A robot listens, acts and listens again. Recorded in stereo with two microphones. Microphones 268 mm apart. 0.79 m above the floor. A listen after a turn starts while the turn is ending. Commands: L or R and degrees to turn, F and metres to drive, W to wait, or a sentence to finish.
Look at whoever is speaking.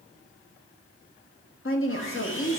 L50
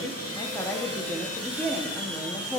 L10
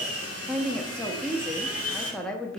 Facing the woman speaking, under 1 m away.